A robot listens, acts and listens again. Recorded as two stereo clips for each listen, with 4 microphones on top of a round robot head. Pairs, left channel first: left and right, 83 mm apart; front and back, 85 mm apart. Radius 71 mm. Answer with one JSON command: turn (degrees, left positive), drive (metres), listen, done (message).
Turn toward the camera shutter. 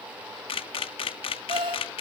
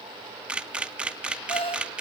{"turn": 100}
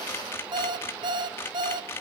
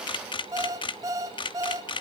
{"turn": 20}
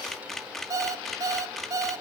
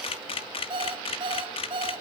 {"done": "Facing the camera shutter."}